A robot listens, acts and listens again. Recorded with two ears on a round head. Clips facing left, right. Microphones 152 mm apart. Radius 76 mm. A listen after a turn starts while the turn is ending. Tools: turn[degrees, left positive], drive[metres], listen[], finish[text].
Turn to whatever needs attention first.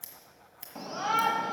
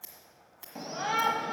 Action: turn[-30]
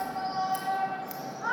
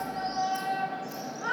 Thought: So it is at 145° right.
Action: turn[-145]
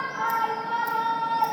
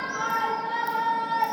Thought: The shout is now 20° right.
Action: turn[-20]
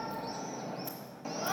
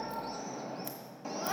Action: finish[Facing the shout, under 1 m away.]